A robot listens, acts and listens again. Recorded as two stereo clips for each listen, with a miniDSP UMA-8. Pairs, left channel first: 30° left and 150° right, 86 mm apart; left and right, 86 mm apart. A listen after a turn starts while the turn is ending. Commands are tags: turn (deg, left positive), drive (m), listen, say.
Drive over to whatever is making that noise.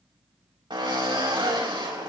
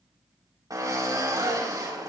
<turn deg="-135"/>
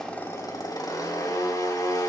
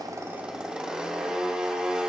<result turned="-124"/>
<turn deg="-10"/>
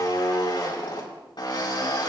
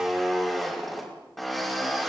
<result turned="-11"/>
<drive m="1.0"/>
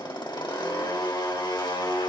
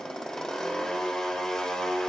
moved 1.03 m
<drive m="1.0"/>
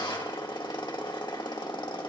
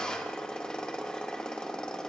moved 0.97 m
<turn deg="10"/>
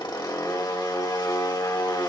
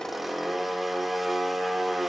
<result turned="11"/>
<drive m="1.0"/>
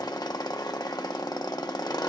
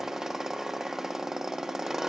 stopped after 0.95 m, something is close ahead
<say>I am next to the drill.</say>